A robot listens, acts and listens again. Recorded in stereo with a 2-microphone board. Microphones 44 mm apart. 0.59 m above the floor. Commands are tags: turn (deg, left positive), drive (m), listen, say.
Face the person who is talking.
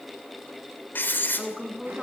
<turn deg="-30"/>
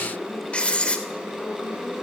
<listen/>
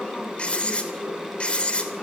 <listen/>
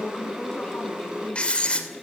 <turn deg="20"/>
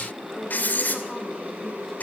<listen/>
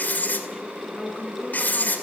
<say>Found it: a woman speaking, straight ahead, over 4 m away.</say>